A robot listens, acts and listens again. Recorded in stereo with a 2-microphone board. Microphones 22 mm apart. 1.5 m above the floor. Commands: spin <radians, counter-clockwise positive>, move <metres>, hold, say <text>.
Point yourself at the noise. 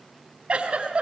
spin -0.87
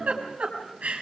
spin -1.40
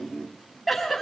say Facing the giggle.